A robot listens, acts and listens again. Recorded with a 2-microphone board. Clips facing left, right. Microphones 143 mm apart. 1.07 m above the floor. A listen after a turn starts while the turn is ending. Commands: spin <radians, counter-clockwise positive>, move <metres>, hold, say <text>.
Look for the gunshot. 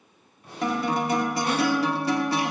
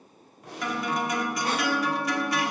spin -1.57
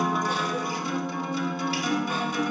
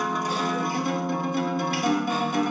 say Facing where the gunshot came from. I can't hear it now.